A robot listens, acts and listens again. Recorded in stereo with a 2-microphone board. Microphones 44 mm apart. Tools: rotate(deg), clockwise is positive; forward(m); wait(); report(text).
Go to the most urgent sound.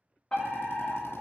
rotate(-15)
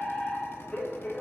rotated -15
rotate(-150)
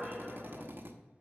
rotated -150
forward(1.0)
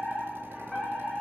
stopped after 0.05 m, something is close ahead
report("Blocked. The fire alarm is further on, straight ahead.")